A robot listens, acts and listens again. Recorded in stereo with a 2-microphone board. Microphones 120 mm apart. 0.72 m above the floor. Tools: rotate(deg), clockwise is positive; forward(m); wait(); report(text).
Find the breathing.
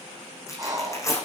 rotate(30)
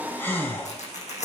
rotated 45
rotate(-15)
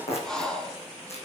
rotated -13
report("Facing the breathing, 2 to 4 m away.")